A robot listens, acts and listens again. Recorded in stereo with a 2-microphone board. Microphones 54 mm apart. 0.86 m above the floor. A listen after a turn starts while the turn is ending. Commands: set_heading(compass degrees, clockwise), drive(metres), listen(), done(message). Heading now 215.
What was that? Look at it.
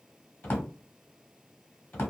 set_heading(185)
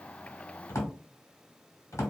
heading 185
set_heading(65)
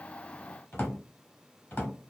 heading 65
set_heading(25)
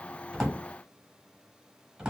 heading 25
set_heading(35)
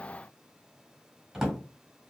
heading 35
done("Found it: a drawer, straight ahead.")